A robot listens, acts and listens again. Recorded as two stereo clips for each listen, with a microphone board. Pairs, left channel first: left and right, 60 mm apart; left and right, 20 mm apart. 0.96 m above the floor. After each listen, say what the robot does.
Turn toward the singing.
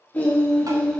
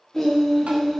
Turn 20° left.
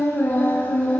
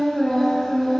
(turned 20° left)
Turn 20° left.
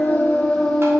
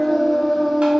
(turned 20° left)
Turn 30° left.
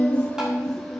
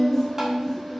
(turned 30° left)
Turn 30° left.
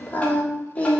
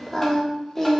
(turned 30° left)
Turn 20° left.
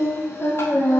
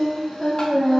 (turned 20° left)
Turn 145° left.
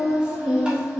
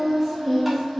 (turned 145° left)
Turn 10° right.
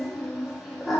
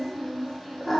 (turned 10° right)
Found it: singing, straight ahead, 1 to 2 m away.